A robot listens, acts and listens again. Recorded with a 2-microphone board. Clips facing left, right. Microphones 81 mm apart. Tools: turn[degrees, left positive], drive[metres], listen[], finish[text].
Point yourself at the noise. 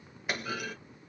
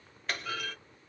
Action: turn[30]
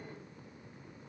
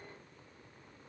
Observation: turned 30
Action: listen[]
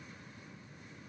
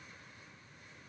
Action: finish[I heard a clunk, but can't make it out now. It was about 20° right or 140° left.]